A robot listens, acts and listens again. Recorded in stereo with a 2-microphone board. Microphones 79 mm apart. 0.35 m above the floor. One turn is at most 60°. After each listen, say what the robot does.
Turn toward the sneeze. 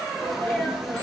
Turn 30° right.
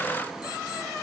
Keep listening.
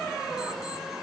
I heard a sneeze, but can't make it out now. It was about 25° left or 145° right.